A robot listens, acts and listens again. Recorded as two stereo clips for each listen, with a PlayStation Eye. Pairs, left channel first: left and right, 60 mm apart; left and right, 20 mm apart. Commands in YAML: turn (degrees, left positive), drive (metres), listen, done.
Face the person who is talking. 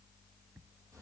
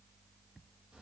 listen: true
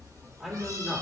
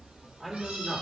turn: -30
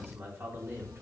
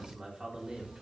turn: -140
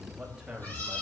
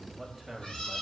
turn: -15
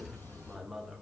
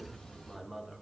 done: "Facing the man speaking."